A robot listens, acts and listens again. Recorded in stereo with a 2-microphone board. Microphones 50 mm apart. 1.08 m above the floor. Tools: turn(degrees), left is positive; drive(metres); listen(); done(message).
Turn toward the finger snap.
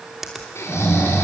turn(degrees=-30)
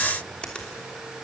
turn(degrees=20)
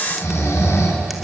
listen()
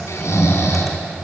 listen()
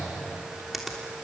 done("Facing the finger snap.")